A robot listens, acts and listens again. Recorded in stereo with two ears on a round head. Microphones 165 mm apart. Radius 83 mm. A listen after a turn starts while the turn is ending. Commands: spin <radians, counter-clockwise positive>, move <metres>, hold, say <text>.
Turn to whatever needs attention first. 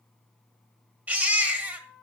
spin -0.52
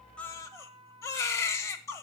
spin 0.35
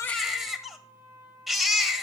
say Facing the baby crying.